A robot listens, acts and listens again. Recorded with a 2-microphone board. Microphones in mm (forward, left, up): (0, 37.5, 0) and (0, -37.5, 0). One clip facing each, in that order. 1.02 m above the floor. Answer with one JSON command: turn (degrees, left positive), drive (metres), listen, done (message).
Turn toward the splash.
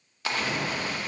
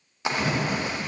{"turn": -20}
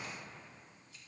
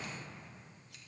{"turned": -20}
{"listen": true}
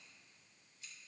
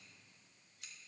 {"done": "I heard a splash, but can't make it out now. It was about straight ahead or 140° right."}